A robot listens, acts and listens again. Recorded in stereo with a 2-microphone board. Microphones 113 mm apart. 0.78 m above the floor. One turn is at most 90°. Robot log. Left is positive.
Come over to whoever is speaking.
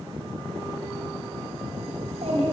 note: The child speaking: about 65° right or 115° right.
cmd yaw -65
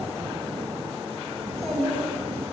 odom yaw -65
cmd fwd 1.0
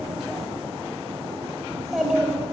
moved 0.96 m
cmd fwd 1.0
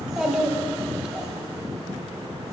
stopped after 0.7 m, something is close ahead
end: I am next to the child speaking.